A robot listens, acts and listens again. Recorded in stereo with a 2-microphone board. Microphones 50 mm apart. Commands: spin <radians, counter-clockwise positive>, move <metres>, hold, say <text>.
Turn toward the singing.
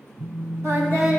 spin -1.13
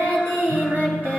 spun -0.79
spin -0.79
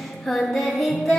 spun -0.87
say Facing the singing.